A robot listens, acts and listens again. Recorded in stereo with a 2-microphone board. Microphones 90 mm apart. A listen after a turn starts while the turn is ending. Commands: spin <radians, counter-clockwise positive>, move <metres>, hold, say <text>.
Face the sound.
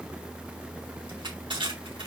spin -1.57
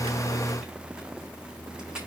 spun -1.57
hold
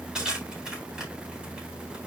spin -0.17
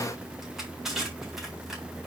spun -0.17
hold
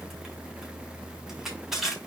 say Facing the crushing, over 4 m away.